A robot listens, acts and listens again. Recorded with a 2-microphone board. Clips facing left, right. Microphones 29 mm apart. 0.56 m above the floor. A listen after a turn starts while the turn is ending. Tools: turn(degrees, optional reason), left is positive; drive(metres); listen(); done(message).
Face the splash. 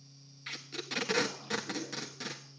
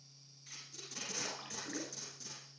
turn(degrees=-55, reason="The splash: about 55° right or 125° right.")
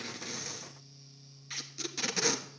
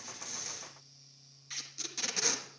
listen()
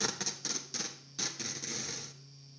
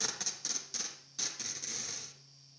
done("I heard a splash, but can't make it out now. It was about straight ahead or 70° right.")